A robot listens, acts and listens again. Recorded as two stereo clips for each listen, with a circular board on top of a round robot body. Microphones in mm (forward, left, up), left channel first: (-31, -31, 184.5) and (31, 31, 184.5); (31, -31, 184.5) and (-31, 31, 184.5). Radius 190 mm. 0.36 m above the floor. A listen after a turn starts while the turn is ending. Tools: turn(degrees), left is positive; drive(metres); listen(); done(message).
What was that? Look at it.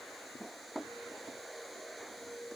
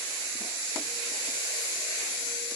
listen()
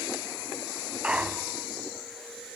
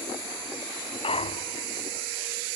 turn(degrees=-35)
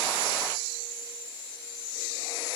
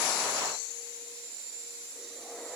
done("Facing where the clunk came from. I can't hear it now.")